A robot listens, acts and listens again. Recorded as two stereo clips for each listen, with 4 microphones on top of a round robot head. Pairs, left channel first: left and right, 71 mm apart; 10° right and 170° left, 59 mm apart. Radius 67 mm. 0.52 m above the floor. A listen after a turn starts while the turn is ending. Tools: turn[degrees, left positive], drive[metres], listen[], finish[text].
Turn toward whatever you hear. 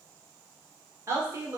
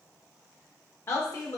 Thought: The woman speaking: 50° right.
Action: turn[-50]
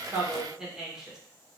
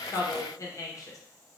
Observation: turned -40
Thought: The woman speaking is now 10° right.
Action: turn[-10]
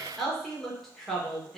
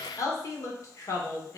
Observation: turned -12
Action: finish[Facing the woman speaking.]